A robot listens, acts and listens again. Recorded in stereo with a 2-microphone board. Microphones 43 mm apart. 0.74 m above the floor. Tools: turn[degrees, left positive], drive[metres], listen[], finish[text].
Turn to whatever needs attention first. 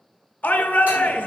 Thought: The shout: about 40° left or 140° left.
Action: turn[40]
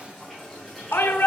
Thought: So it is at 95° left.
Action: turn[95]
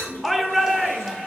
Action: finish[Found it: a shout, straight ahead, under 1 m away.]